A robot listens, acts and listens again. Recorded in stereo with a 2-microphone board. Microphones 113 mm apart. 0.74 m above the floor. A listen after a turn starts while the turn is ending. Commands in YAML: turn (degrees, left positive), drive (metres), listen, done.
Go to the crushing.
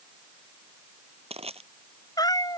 turn: -75
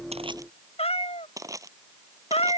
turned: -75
turn: -30
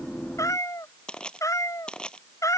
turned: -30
turn: 10
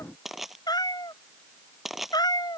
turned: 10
drive: 1.0
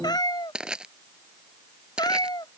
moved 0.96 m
turn: -10
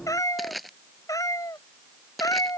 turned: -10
drive: 1.0
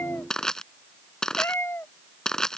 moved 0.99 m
drive: 1.0
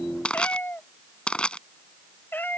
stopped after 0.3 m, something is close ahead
turn: 10
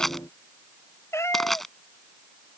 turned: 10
done: "I am next to the crushing."